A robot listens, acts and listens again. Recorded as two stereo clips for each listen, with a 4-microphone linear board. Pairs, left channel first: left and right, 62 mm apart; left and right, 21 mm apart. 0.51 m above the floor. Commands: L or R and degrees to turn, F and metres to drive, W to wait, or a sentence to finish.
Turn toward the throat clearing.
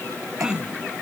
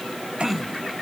R30
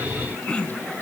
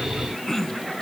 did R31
L20
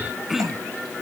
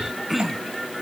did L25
Facing the throat clearing.